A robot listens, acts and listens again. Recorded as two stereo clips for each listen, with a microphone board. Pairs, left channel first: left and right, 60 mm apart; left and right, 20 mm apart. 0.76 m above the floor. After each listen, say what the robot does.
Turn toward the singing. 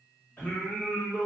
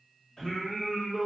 Turn 35° left.
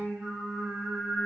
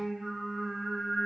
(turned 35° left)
Found it: singing, straight ahead.